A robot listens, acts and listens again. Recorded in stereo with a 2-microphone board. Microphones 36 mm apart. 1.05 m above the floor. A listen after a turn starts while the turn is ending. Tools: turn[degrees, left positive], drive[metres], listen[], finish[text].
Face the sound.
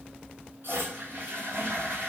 Thought: The toilet flushing: about 65° right or 115° right.
Action: turn[-65]
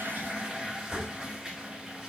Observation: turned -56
Thought: So it is at 10° right.
Action: turn[-10]
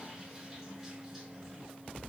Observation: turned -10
Action: listen[]
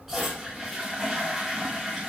Action: finish[Found it: a toilet flushing, straight ahead, over 4 m away.]